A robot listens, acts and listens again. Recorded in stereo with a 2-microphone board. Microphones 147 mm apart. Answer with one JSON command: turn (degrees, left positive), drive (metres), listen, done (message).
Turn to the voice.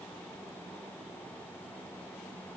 {"listen": true}
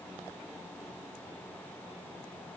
{"listen": true}
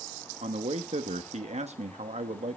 {"turn": -50}
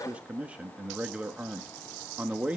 {"turn": -10}
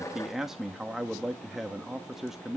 {"done": "Found it: a man speaking, straight ahead, 1 to 2 m away."}